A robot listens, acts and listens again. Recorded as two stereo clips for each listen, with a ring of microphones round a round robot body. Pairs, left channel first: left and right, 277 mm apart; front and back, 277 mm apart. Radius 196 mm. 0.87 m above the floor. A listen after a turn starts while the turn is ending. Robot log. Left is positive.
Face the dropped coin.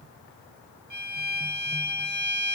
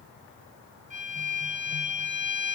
cmd idle
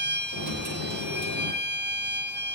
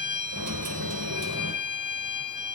note: The dropped coin: 135° right.
cmd yaw -135
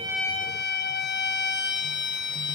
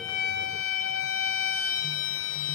end: Facing where the dropped coin came from. I can't hear it now.